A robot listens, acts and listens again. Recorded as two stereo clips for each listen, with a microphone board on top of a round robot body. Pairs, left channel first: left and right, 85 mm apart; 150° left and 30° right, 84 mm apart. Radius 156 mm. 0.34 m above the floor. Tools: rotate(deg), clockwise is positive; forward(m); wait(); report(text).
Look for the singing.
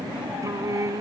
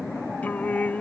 rotate(140)
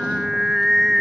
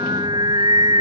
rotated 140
report("Found it: singing, straight ahead.")